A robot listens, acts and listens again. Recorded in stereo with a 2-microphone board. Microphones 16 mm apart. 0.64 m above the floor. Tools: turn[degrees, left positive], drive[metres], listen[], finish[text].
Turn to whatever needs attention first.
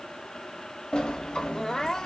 Thought: The crying: about 45° left or 135° left.
Action: turn[45]
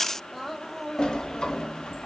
Thought: So it is at 10° left.
Action: turn[10]
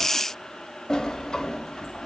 Action: listen[]
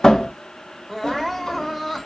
Action: finish[Facing the crying.]